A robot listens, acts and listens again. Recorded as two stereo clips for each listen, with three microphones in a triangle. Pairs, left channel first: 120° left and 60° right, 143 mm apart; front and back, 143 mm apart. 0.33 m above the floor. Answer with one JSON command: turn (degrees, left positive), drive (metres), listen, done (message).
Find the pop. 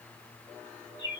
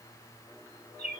{"listen": true}
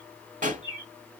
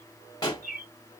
{"turn": -60}
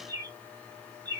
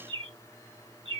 {"done": "I heard a pop from this way, but can't make it out now."}